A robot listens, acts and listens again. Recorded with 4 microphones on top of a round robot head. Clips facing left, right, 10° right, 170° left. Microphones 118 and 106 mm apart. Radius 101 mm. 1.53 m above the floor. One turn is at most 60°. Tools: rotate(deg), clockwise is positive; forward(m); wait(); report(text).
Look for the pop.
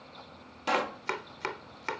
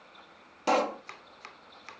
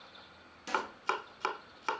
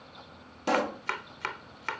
rotate(60)
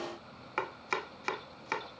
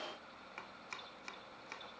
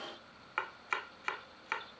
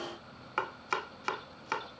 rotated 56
rotate(60)
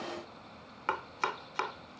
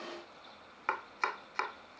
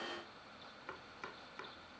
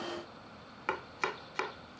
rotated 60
rotate(25)
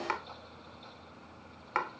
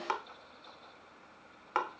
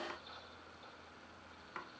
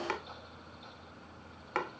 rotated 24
report("Facing where the pop came from. I can't hear it now.")